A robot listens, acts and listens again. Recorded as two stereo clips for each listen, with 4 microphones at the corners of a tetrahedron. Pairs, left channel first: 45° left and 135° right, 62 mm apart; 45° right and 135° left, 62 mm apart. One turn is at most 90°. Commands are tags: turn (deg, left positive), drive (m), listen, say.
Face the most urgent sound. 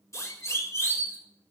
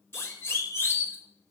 <say>Found it: a siren, straight ahead, over 4 m away.</say>